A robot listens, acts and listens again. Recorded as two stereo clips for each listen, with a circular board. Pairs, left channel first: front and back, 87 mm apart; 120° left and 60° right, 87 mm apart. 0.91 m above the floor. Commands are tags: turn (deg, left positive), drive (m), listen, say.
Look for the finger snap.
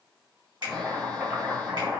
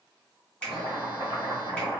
<turn deg="-170"/>
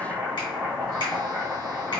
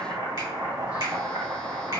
<listen/>
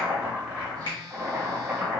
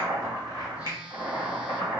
<turn deg="-30"/>
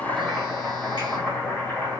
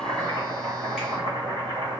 <listen/>
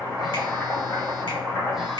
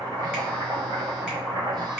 <listen/>
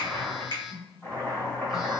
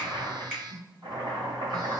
<turn deg="15"/>
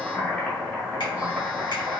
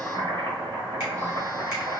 <listen/>
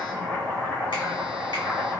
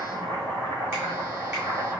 <listen/>
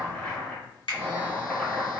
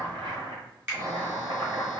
<say>Found it: a finger snap, straight ahead, 1 to 2 m away.</say>